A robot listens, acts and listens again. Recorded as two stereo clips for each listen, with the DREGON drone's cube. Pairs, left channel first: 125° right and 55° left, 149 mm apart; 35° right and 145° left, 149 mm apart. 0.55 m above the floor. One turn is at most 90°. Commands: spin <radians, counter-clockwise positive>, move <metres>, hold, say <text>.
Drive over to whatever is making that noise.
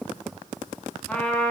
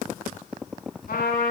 spin -0.70
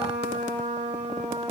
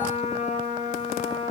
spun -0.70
spin 0.26
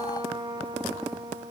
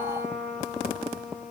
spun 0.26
move 1.0
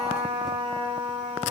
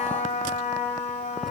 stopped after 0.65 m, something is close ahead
say Blocked. The trumpet is further on, straight ahead.